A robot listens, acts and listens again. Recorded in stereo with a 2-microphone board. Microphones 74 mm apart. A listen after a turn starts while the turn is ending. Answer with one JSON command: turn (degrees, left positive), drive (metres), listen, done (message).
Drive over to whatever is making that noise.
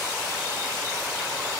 {"listen": true}
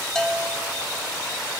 {"turn": 30}
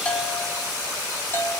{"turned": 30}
{"turn": 145}
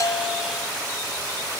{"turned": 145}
{"listen": true}
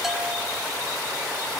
{"listen": true}
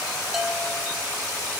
{"done": "I heard a bell from this way, but can't make it out now. I did not reach it."}